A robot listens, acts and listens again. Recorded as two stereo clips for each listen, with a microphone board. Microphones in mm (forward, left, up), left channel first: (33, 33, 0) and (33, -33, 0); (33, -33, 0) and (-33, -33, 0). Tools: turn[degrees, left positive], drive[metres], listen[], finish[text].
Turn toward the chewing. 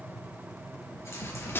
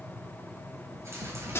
Thought: The chewing: 135° left.
Action: turn[135]
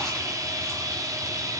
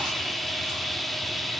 Action: listen[]
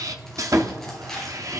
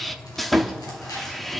Action: finish[Found it: chewing, straight ahead, over 4 m away.]